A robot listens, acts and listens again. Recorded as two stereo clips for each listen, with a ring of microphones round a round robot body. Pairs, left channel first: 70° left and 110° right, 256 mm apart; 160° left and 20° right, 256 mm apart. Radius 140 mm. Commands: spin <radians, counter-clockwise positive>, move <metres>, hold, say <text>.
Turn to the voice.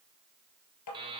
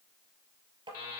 hold
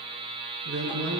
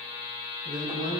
spin -2.53
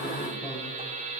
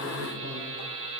spin -0.26
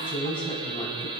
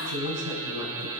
say Found it: a woman speaking, straight ahead, 2 to 4 m away.